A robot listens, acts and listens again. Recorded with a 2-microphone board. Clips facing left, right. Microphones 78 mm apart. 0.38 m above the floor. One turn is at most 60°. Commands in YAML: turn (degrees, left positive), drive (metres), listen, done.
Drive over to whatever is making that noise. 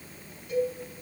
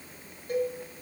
turn: -40
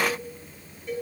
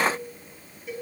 drive: 1.0
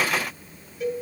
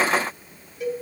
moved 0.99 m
drive: 1.0
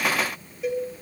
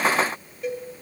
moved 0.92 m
drive: 1.0
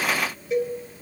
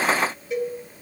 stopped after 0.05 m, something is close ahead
done: "Arrived at the cowbell, straight ahead."